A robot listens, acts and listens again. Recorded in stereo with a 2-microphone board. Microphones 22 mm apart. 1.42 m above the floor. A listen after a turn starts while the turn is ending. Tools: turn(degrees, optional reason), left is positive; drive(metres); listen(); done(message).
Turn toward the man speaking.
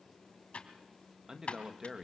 turn(degrees=-25, reason="The man speaking: about 25° right or 155° right.")
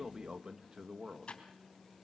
turn(degrees=-30, reason="The man speaking: about 30° right or 150° right.")
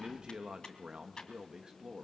turn(degrees=-30, reason="The man speaking: about 30° right or 150° right.")
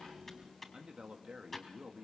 turn(degrees=-130, reason="So it is at 130° right.")
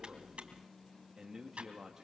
turn(degrees=-30, reason="The man speaking is now 30° right.")
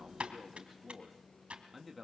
turn(degrees=-10, reason="The man speaking is now 10° right.")
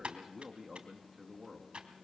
done("Found it: a man speaking, straight ahead, 1 to 2 m away.")